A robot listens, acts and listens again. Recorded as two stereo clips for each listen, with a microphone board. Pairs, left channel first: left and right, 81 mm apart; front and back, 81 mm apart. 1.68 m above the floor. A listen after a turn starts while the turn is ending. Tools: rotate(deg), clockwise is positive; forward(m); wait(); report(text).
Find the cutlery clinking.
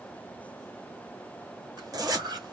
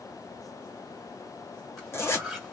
rotate(85)
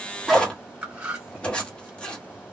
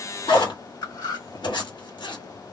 rotate(15)
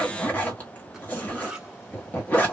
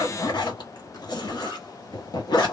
rotate(10)
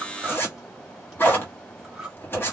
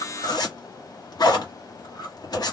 report("Found it: cutlery clinking, straight ahead.")